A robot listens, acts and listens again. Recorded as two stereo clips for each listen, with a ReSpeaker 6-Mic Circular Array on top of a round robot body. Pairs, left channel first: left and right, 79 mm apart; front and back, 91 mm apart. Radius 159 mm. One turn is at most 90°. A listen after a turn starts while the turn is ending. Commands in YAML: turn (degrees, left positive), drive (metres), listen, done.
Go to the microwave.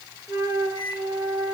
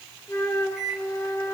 turn: -90
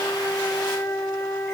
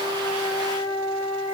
listen: true
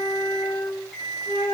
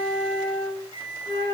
turn: 10
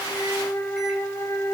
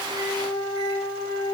listen: true
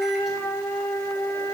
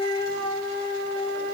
listen: true
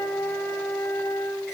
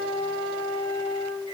done: "Facing where the microwave came from. I can't hear it now. I did not reach it."